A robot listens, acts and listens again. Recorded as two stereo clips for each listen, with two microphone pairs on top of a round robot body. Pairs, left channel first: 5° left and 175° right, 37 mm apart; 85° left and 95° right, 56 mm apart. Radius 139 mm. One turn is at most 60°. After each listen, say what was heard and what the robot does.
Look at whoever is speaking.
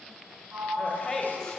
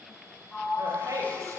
The woman speaking: 75° right. Turn 60° right.
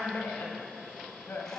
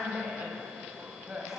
The woman speaking is now 25° right. Turn 25° right.
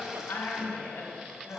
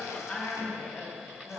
The woman speaking is now 10° left. Turn 10° left.
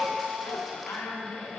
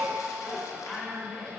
Facing the woman speaking, over 4 m away.